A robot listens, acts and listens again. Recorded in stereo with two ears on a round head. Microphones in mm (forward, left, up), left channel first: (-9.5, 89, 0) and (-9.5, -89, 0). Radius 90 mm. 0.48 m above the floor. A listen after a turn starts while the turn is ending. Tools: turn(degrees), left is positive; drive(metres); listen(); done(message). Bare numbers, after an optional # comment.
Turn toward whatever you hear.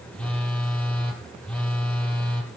turn(30)
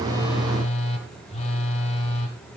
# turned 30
# So it is at 145° left.
turn(145)
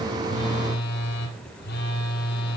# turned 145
# The phone buzzing is now 55° left.
turn(55)
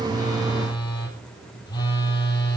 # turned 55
# The phone buzzing is now 20° left.
turn(20)
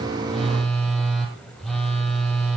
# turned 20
done("Found it: a phone buzzing, straight ahead.")